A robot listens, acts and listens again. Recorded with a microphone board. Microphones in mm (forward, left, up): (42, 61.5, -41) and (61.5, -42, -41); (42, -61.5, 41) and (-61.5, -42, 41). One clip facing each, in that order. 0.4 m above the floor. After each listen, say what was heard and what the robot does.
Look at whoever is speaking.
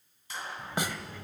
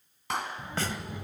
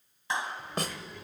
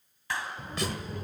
The child speaking: 145° right. Turn 145° right.
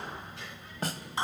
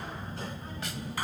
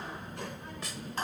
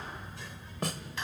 The child speaking is now 35° right. Turn 35° right.
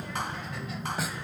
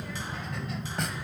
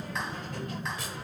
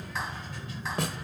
The child speaking is now 10° left. Turn 10° left.
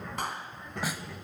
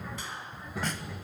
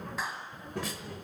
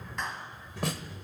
Found it: a child speaking, straight ahead, under 1 m away.